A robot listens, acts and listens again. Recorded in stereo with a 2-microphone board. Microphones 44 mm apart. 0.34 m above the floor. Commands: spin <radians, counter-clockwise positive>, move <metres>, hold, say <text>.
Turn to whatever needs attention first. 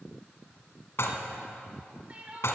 spin -0.61
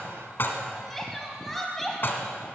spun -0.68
say Found it: crying, straight ahead, 2 to 4 m away.